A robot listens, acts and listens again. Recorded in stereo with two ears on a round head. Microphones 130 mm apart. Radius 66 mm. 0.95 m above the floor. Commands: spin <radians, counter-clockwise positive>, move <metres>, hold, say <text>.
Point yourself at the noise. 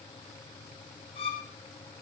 spin 0.70
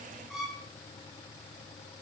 say Facing the violin.